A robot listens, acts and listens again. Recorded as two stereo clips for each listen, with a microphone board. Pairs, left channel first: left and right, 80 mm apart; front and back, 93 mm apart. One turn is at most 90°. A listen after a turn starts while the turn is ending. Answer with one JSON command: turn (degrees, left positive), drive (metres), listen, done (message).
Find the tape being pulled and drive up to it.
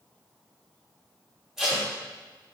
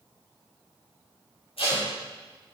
{"drive": 1.0}
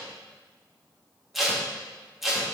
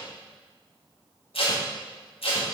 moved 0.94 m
{"drive": 1.0}
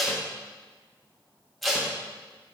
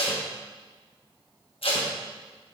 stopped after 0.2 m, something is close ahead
{"done": "Arrived at the tape being pulled, straight ahead."}